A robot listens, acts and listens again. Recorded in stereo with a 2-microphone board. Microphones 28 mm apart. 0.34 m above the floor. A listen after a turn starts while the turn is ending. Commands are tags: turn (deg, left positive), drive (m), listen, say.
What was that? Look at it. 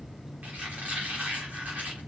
<turn deg="-90"/>
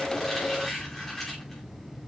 <turn deg="10"/>
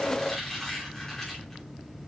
<say>Facing the squeak.</say>